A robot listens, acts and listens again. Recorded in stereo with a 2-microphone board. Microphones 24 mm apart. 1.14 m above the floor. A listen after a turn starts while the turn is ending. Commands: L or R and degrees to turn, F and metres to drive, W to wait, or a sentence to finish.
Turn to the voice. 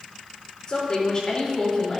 L25
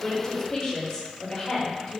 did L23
L35
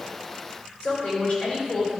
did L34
L125
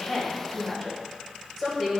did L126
Found it: a woman speaking, straight ahead.